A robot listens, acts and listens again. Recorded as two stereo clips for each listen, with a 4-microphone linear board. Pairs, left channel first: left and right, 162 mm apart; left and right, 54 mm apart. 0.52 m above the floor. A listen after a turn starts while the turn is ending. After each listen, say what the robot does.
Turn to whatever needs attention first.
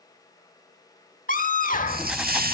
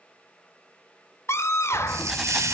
Turn 55° left.
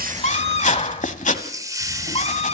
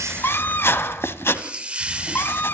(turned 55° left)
Turn 50° left.
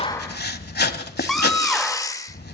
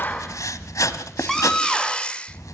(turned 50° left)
Facing the scream, 1 to 2 m away.